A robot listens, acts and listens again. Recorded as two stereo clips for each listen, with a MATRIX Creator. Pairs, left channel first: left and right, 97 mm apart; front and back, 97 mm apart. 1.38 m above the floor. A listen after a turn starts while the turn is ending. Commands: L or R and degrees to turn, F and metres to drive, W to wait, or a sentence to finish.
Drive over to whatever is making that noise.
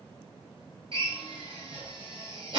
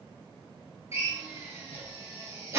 R120
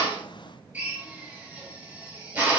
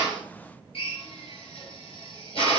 R20
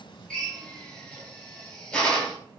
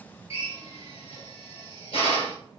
F1.0
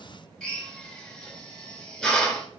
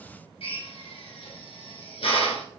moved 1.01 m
F1.0
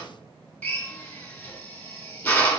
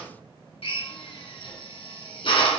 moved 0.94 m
L15
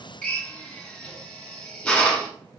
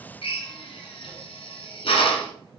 L10
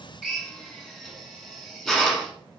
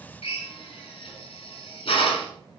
F1.0
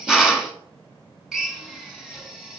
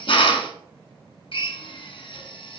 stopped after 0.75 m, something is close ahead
Arrived at the drill, straight ahead.